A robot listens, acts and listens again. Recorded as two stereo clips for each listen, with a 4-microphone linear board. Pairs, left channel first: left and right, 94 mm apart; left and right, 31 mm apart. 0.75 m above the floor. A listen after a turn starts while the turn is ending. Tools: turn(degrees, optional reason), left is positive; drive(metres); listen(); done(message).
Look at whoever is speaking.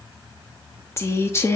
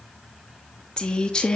turn(degrees=30, reason="The woman speaking: about 30° left or 150° left.")
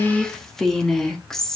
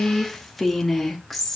done("Facing the woman speaking, under 1 m away.")